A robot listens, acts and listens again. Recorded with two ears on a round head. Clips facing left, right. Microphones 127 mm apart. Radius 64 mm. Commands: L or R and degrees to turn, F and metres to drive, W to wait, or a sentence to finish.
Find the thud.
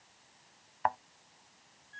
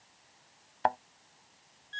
R40
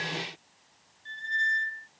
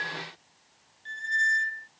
W
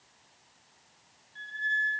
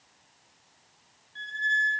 I heard a thud, but can't make it out now. It was about straight ahead or 100° right.